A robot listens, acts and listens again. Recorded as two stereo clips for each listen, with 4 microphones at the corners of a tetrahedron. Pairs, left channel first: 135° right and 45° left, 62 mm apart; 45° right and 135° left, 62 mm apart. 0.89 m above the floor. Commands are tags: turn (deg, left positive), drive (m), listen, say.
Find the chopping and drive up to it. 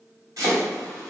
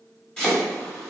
<turn deg="30"/>
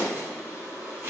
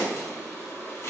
<turn deg="-10"/>
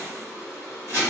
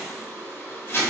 <drive m="1.0"/>
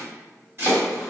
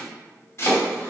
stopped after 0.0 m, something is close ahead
<say>Something is in my way. I am facing the chopping but have not reached it.</say>